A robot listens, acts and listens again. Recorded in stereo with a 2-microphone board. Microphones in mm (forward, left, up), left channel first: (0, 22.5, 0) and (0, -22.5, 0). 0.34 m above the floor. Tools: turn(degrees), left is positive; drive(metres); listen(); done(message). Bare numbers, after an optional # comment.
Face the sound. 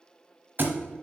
# The thud: about 50° right or 130° right.
turn(-50)
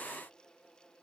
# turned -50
listen()
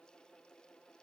done("I heard a thud, but can't make it out now. It was about straight ahead or 80° right.")